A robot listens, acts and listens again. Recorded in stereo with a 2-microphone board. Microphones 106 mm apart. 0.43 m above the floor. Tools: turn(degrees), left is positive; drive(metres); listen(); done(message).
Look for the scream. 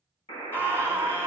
turn(degrees=20)
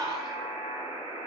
turn(degrees=135)
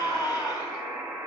turn(degrees=40)
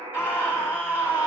turn(degrees=-20)
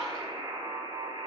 done("Facing the scream, 2 to 4 m away.")